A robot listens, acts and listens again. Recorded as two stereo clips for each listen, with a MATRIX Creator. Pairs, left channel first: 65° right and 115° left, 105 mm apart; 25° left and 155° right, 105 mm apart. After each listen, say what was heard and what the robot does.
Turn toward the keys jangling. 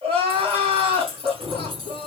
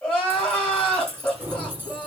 The keys jangling: 135° left. Turn 135° left.
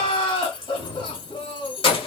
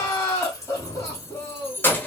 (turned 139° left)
The keys jangling is now 45° right. Turn 45° right.
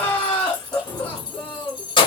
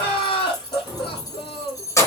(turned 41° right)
The keys jangling is now 35° right. Turn 35° right.
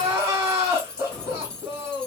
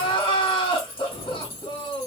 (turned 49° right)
The keys jangling is now 15° left. Turn 15° left.
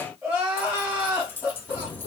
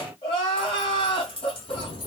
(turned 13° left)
Found it: keys jangling, straight ahead.